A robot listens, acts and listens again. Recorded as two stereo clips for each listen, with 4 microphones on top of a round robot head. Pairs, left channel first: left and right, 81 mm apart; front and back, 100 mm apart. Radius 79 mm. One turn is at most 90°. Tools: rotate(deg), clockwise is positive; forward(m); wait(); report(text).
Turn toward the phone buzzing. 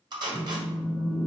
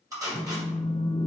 rotate(35)
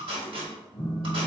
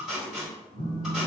rotate(10)
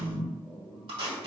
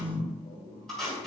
report("Facing the phone buzzing.")